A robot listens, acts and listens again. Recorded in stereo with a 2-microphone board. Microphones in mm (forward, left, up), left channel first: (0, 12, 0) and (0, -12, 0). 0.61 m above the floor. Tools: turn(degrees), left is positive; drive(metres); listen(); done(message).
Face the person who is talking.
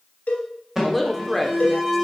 turn(degrees=30)
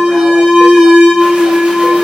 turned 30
listen()
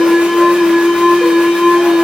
listen()
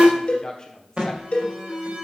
turn(degrees=145)
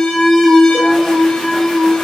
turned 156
turn(degrees=-10)
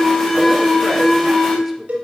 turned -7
listen()
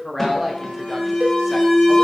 done("Facing the woman speaking, 1 to 2 m away.")